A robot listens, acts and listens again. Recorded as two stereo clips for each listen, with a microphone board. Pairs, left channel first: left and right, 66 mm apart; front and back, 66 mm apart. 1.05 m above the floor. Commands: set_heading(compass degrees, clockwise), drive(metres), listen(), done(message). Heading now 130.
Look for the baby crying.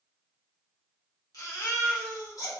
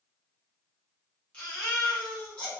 set_heading(60)
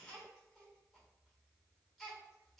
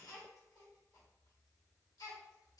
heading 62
done("Facing the baby crying.")